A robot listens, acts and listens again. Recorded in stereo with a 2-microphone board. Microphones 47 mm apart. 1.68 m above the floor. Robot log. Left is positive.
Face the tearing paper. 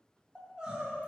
cmd idle
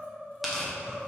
cmd yaw +30
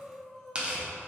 note: So it is at 25° right.
cmd yaw -25
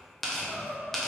end: Facing the tearing paper.